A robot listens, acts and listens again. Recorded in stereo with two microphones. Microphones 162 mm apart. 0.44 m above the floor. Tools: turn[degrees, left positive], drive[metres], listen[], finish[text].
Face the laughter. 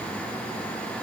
Action: listen[]
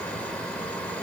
Action: listen[]
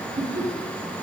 Thought: The laughter: about 70° right or 110° right.
Action: turn[-70]
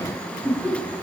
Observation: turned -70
Thought: So it is at 10° right.
Action: turn[-10]
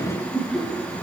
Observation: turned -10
Action: finish[Facing the laughter, over 4 m away.]